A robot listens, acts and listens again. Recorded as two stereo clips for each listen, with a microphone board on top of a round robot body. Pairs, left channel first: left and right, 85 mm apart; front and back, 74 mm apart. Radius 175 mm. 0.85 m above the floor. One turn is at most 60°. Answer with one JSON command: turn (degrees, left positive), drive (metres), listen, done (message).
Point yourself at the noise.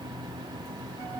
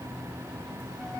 {"listen": true}
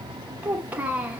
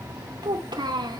{"turn": -60}
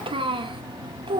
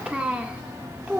{"turn": -60}
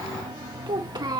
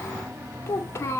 {"turn": -55}
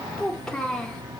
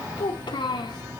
{"turn": 10}
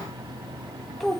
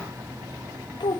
{"done": "Found it: a child speaking, straight ahead."}